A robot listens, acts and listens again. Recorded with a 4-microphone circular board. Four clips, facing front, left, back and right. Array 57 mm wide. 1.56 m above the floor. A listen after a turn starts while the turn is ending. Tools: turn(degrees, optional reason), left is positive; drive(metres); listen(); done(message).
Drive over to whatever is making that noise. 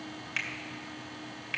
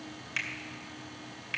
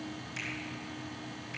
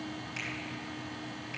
turn(degrees=35, reason="The finger snap: 35° left.")
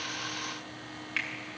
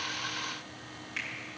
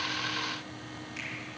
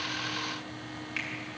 turn(degrees=-10, reason="The finger snap is now 10° right.")
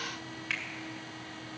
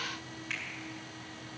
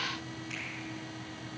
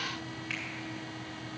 drive(metres=1.0)
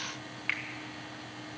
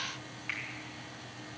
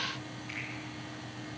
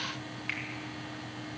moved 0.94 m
turn(degrees=-10, reason="The finger snap is now 10° right.")
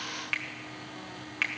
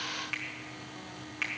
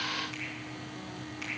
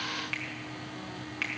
drive(metres=1.0)
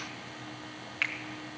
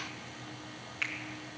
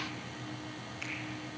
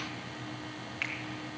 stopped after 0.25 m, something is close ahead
done("I am next to the finger snap.")